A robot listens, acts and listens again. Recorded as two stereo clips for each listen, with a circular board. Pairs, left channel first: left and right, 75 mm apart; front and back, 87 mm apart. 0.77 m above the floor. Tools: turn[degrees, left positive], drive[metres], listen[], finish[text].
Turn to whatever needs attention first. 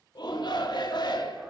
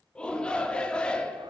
Thought: The shout: 80° left.
Action: turn[80]
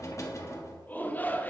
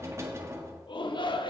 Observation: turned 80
Thought: The shout is now 25° left.
Action: turn[25]
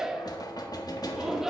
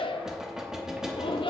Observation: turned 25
Action: finish[Found it: a shout, straight ahead.]